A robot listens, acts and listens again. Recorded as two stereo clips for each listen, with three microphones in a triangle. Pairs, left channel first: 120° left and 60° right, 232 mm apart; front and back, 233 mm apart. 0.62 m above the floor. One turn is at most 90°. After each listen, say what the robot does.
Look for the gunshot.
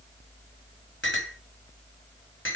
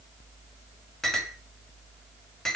Keep listening.
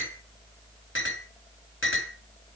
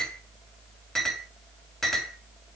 Keep listening.
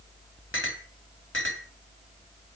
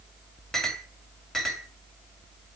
I can't make out a gunshot to turn to.